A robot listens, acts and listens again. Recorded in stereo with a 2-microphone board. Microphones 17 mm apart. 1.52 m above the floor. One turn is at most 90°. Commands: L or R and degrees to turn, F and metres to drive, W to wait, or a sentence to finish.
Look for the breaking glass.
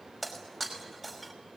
R30
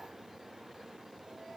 W
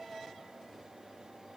I heard breaking glass, but can't make it out now. It was about 25° left or 145° right.